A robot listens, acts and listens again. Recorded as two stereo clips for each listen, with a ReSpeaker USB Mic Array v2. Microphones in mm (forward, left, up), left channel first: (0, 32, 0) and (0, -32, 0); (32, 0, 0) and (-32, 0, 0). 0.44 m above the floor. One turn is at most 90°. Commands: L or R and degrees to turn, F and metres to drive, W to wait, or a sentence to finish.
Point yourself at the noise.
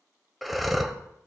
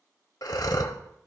Facing the breathing.